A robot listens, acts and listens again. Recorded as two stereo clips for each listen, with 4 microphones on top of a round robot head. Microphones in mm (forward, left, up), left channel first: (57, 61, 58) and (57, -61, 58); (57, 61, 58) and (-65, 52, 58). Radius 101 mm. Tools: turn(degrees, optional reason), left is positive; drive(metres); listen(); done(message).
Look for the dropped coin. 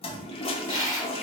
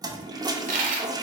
turn(degrees=160, reason="The dropped coin: 160° left.")
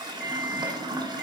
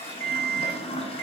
done("I heard a dropped coin from this way, but can't make it out now.")